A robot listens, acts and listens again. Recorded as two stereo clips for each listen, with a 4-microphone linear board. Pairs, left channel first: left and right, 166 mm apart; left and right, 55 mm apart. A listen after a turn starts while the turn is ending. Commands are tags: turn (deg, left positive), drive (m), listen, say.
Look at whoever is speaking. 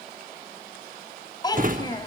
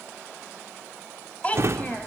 <turn deg="25"/>
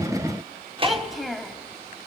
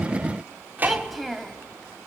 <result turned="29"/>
<say>Facing the child speaking.</say>